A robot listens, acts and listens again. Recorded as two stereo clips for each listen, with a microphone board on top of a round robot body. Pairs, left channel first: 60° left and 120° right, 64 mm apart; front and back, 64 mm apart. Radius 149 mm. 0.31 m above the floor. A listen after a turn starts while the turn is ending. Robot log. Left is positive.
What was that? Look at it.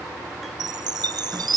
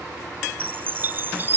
note: The chime: 120° right.
cmd yaw -120
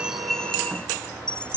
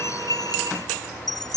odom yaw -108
note: The chime is now 10° right.
cmd yaw -10
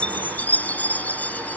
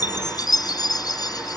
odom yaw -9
end: Facing the chime.